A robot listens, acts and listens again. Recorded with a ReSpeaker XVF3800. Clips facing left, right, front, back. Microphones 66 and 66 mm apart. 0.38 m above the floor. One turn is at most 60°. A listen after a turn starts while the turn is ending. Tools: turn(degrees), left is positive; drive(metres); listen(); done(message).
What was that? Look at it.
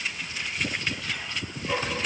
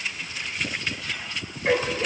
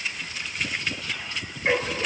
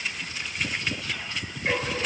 turn(degrees=-60)
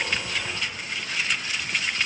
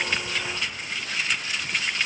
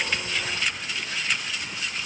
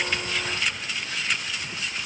listen()
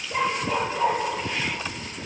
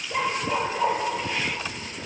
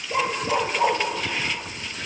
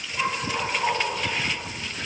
done("Facing the dog barking.")